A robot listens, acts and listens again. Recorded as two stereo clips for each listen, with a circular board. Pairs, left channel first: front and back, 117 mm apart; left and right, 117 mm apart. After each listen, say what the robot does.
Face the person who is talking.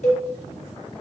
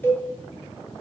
Keep listening.
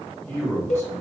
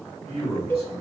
Turn 65° right.
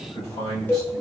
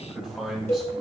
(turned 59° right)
Facing the man speaking.